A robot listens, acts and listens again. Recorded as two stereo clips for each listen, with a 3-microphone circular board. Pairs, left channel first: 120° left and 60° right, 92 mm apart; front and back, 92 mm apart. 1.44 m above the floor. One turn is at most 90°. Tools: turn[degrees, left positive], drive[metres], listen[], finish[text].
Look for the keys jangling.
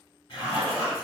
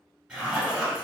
Action: listen[]
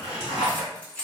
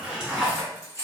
Thought: The keys jangling: 50° left.
Action: turn[50]
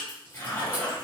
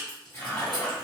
Thought: The keys jangling is now 10° left.
Action: turn[10]
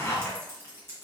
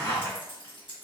Action: finish[Facing the keys jangling.]